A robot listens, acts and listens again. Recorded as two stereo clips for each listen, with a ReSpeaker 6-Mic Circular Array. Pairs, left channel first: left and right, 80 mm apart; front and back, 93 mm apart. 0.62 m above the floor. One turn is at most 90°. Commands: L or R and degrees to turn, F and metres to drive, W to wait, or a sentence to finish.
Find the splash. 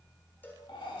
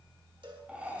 W
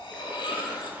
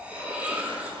R90
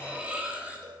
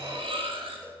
R70
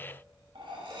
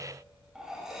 Facing where the splash came from. I can't hear it now.